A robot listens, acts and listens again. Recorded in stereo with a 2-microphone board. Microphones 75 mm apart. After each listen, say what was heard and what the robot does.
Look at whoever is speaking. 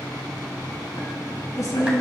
The woman speaking: about 50° left or 130° left. Turn 50° left.
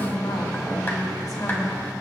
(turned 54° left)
So it is at 70° left. Turn 70° left.
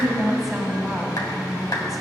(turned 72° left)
Found it: a woman speaking, straight ahead.